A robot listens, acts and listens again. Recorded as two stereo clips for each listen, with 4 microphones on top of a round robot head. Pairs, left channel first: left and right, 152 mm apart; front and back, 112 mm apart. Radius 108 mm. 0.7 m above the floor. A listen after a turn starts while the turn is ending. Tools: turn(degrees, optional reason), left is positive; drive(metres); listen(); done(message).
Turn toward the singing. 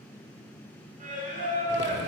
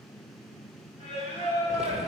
turn(degrees=-60, reason="The singing: 60° right.")
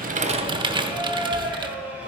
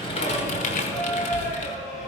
turn(degrees=-10, reason="The singing is now 10° right.")
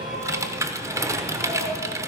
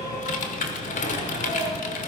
listen()
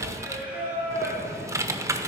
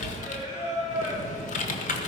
turn(degrees=-10, reason="The singing is now 10° right.")
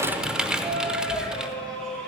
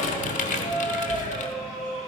done("Found it: singing, straight ahead, over 4 m away.")